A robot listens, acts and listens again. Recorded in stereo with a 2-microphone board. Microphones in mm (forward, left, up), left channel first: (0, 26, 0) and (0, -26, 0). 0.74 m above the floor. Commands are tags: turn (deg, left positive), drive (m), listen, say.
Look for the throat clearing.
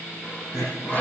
<turn deg="90"/>
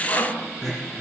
<say>Found it: throat clearing, straight ahead.</say>